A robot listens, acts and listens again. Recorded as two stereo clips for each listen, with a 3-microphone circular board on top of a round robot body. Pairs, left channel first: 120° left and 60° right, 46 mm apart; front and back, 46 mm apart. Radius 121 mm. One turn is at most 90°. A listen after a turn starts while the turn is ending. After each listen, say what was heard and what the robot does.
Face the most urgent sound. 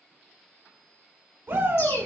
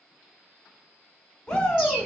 The shout: 70° right. Turn 70° right.
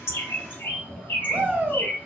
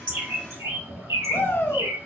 The shout is now 10° right. Turn 10° right.
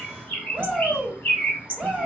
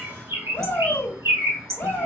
Facing the shout, 1 to 2 m away.